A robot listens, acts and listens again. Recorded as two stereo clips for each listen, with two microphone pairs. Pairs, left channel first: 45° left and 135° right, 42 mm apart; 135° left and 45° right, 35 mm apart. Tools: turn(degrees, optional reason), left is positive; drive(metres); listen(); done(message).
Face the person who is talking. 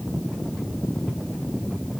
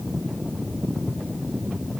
listen()
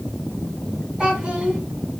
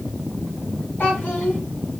turn(degrees=155, reason="The child speaking: 155° left.")
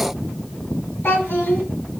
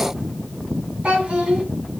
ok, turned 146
turn(degrees=10, reason="The child speaking is now 10° left.")
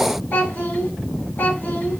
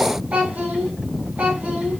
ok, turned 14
done("Found it: a child speaking, straight ahead.")